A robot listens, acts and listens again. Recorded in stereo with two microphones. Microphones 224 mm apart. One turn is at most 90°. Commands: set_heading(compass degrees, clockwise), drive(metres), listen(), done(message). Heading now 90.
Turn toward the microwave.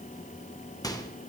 set_heading(75)
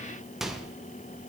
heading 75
done("Facing the microwave, under 1 m away.")